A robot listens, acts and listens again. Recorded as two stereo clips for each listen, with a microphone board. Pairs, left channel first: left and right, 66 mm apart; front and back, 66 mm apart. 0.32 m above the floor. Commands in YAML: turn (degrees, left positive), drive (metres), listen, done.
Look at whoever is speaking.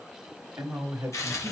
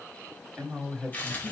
turn: -100
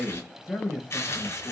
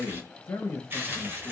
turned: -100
turn: 10
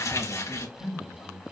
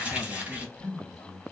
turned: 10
turn: 45
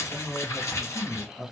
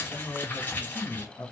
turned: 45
done: "Facing the man speaking, 2 to 4 m away."